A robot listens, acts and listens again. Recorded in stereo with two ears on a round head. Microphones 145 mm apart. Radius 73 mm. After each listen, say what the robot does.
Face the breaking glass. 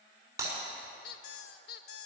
Turn 20° right.
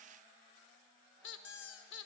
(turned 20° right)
Keep listening.
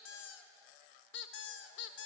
I heard breaking glass, but can't make it out now. It was about straight ahead or 140° right.